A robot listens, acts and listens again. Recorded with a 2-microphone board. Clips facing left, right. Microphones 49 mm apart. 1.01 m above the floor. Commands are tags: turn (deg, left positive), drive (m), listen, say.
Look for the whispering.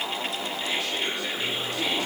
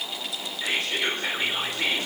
<turn deg="-45"/>
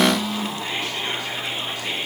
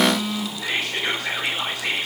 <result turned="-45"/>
<turn deg="-85"/>
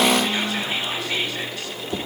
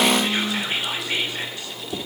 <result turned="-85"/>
<turn deg="-25"/>
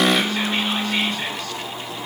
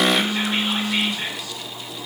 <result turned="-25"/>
<listen/>
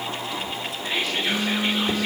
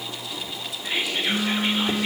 <turn deg="-10"/>
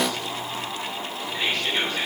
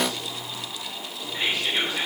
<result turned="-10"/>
<say>Found it: whispering, straight ahead.</say>